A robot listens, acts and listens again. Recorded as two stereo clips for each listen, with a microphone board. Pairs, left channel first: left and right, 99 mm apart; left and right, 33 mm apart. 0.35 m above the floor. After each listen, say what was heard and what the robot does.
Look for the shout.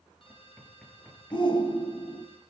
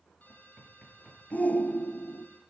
The shout: about 55° left or 125° left. Turn 55° left.
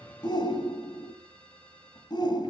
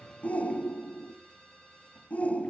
So it is at 60° left. Turn 60° left.
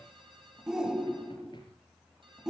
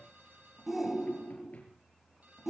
The shout is now 10° right. Turn 10° right.
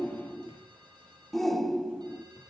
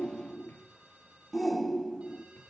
Found it: a shout, straight ahead.